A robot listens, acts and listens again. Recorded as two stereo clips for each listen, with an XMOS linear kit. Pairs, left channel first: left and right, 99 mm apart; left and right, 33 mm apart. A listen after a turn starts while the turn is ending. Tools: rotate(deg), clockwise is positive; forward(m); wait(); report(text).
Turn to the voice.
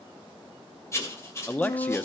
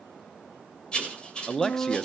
rotate(-15)
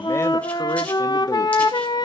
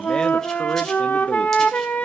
wait()
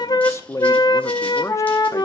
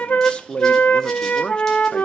rotate(-150)
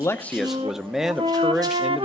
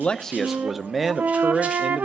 report("Found it: a man speaking, straight ahead, under 1 m away.")